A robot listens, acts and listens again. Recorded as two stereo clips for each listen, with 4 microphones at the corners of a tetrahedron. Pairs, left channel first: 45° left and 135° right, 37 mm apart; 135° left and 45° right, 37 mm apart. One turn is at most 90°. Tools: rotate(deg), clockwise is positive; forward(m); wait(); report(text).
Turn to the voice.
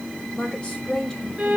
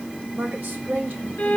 rotate(15)
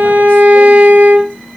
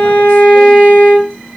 wait()
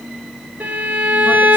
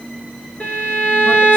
wait()
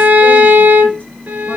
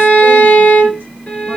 report("Facing where the woman speaking came from. I can't hear it now.")